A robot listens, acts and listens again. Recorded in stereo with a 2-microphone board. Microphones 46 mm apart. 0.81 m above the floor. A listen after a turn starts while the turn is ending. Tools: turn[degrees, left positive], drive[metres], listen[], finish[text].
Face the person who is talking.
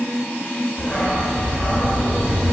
Action: listen[]
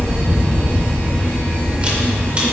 Action: listen[]
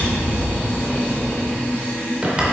Action: finish[I can't make out anyone speaking, only a dog barking and a camera shutter.]